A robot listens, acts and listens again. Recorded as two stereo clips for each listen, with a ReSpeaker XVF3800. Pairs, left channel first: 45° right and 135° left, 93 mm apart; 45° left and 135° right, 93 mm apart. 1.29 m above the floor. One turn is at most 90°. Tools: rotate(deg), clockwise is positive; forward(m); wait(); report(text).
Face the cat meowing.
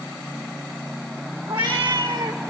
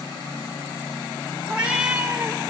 rotate(-90)
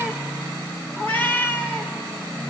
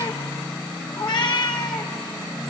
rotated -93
rotate(-20)
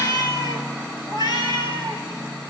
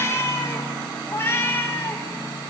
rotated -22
rotate(20)
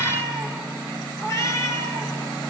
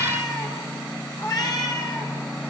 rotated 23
report("Found it: a cat meowing, straight ahead.")